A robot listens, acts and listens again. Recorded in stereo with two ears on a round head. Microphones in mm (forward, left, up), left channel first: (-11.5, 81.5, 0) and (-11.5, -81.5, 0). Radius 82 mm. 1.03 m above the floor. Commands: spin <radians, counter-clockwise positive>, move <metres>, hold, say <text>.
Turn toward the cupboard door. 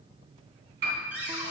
spin -0.52
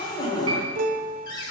spin 0.44
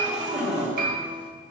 say Facing the cupboard door, 2 to 4 m away.